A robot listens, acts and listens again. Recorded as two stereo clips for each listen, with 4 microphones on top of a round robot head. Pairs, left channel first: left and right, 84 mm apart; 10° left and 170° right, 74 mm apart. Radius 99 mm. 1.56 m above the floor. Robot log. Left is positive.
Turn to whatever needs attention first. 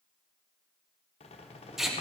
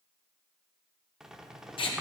cmd idle
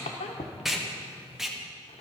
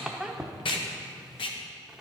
cmd idle
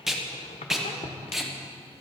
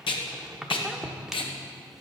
end: I can't make out anything urgent, only a squeak and tape being pulled.